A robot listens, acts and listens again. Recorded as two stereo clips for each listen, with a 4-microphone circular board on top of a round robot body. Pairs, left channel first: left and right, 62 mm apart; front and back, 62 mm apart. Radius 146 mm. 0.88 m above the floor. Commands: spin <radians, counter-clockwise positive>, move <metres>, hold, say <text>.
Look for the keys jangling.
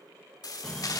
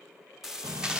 spin 1.83
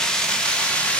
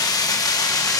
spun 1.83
spin 0.35
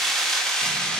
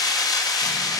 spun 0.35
spin 0.17
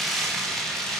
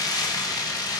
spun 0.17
say Facing the keys jangling, 2 to 4 m away.